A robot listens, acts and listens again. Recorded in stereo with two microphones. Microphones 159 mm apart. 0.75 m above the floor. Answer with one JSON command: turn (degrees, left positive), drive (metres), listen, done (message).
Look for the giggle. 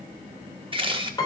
{"listen": true}
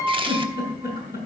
{"turn": 65}
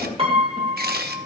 {"listen": true}
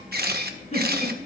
{"turn": 50}
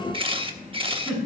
{"done": "Found it: a giggle, straight ahead, over 4 m away."}